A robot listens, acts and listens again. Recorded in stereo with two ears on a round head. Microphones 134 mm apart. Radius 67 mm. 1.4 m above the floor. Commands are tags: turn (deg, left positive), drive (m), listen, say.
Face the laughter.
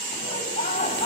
<turn deg="55"/>
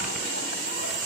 <listen/>
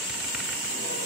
<listen/>
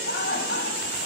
<turn deg="70"/>
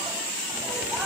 <listen/>
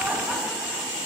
<listen/>
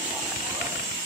<say>I heard laughter from this way, but can't make it out now.</say>